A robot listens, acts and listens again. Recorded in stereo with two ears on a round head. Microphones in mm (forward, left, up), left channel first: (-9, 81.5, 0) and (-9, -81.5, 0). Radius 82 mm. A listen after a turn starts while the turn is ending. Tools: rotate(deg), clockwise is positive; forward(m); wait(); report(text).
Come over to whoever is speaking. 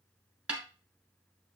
wait()
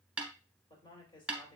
rotate(-30)
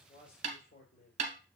rotate(-120)
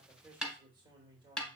rotate(25)
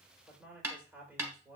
rotate(10)
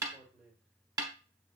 forward(1.0)
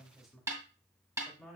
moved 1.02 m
forward(1.0)
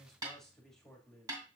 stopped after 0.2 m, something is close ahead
report("Arrived at the man speaking, straight ahead.")